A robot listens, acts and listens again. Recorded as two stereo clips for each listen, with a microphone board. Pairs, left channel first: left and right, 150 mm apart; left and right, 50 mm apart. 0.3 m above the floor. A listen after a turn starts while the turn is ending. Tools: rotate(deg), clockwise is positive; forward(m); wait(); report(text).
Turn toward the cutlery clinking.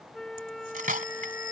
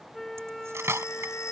rotate(65)
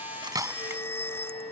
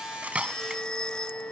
wait()
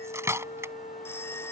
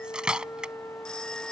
rotate(20)
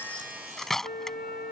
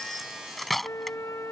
report("Facing the cutlery clinking.")